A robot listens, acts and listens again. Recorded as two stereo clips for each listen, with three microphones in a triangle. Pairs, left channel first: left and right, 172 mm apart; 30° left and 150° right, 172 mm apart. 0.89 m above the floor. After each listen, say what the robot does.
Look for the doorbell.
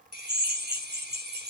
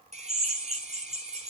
Keep listening.
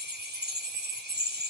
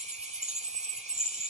Keep listening.
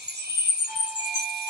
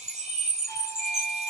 Turn 160° right.
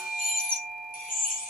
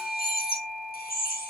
Facing the doorbell, over 4 m away.